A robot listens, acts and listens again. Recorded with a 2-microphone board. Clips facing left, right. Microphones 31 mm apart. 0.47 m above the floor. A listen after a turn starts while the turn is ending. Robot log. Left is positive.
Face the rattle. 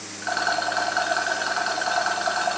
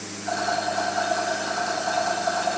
note: The rattle: about 50° left or 130° left.
cmd yaw +50
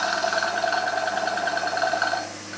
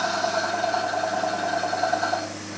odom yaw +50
note: So it is at 75° left.
cmd yaw +75
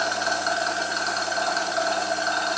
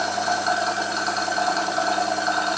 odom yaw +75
end: Facing the rattle.